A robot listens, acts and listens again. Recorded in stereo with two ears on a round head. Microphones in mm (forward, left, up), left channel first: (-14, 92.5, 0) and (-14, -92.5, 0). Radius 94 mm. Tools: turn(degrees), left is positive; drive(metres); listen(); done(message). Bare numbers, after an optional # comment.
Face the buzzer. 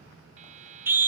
# The buzzer: about 35° right or 145° right.
turn(-35)
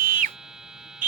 done("Facing the buzzer.")